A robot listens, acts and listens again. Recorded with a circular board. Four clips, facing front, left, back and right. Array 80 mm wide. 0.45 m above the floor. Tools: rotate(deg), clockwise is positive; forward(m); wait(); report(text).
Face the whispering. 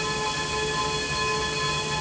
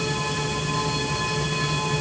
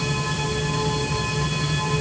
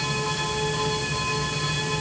wait()
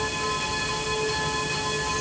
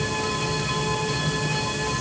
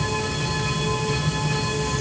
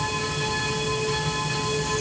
wait()
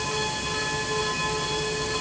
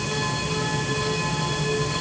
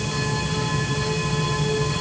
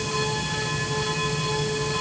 report("I can't make out whispering to turn to.")